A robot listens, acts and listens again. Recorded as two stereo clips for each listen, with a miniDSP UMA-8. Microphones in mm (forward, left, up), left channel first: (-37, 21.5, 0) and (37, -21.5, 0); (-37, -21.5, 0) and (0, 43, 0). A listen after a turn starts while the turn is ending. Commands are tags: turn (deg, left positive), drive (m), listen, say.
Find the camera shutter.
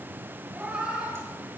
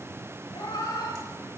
<listen/>
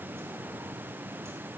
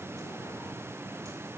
<listen/>
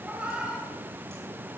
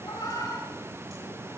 <say>I can't make out a camera shutter, only a cat meowing.</say>